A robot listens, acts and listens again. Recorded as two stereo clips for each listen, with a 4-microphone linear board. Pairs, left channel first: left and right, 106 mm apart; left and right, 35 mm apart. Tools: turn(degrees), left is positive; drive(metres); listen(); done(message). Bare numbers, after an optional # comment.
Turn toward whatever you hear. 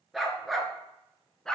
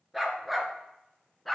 turn(30)
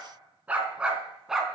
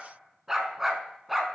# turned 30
turn(-30)
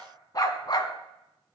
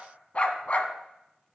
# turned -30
# So it is at 45° left.
turn(45)
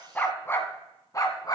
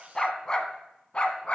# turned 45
# The dog barking is now 40° left.
turn(40)
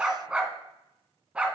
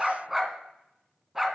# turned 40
# The dog barking is now 10° right.
turn(-10)
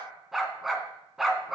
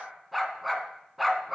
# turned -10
done("Facing the dog barking, 1 to 2 m away.")